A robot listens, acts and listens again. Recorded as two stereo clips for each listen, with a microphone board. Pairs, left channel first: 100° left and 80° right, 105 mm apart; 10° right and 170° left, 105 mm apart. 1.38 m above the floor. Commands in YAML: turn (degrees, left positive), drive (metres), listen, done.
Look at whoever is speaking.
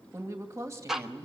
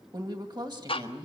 turn: -140
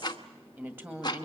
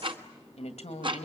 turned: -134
done: "Found it: a woman speaking, straight ahead, 2 to 4 m away."